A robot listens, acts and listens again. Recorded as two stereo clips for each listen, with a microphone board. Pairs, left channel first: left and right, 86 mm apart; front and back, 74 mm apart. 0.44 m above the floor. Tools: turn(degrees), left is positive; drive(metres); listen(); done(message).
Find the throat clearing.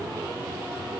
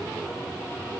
listen()
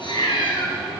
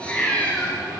listen()
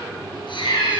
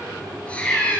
done("I can't make out throat clearing to turn to.")